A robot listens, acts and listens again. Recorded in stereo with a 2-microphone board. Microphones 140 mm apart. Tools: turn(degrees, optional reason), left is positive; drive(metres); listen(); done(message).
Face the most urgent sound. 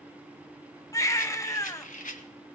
turn(degrees=25, reason="The baby crying: about 25° left or 155° left.")
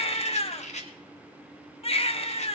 turn(degrees=130, reason="So it is at 130° left.")
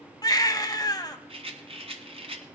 turn(degrees=30, reason="The baby crying is now 30° left.")
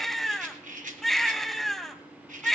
done("Found it: a baby crying, straight ahead, under 1 m away.")